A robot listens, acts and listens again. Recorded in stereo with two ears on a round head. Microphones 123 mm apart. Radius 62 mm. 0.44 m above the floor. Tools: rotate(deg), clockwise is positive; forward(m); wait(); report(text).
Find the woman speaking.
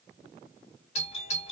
wait()
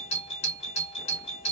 wait()
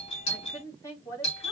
rotate(-25)
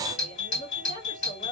rotate(-130)
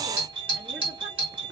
wait()
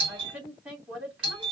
rotate(10)
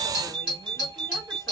wait()
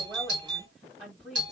report("Found it: a woman speaking, straight ahead, 2 to 4 m away.")